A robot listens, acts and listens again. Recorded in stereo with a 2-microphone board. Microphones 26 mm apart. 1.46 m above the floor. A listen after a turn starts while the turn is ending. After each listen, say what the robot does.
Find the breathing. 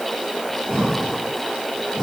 Turn 25° left.
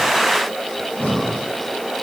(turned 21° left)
Turn 130° left.
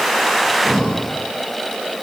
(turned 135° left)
Found it: breathing, straight ahead, over 4 m away.